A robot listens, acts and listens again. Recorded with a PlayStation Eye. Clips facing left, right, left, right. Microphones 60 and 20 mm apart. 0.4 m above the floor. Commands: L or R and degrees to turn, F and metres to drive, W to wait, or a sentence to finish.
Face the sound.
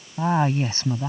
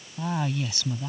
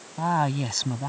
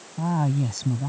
L35
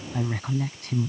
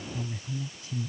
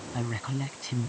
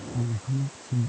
L115
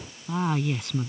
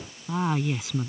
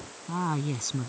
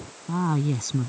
Facing the woman speaking.